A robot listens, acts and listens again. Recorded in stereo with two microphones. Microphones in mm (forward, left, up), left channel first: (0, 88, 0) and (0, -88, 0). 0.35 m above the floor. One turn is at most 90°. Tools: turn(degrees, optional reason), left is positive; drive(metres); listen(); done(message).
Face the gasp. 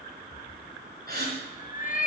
turn(degrees=-65, reason="The gasp: about 65° right or 115° right.")
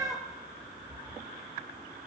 listen()
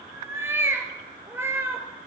done("I heard a gasp, but can't make it out now. It was about straight ahead or 50° right.")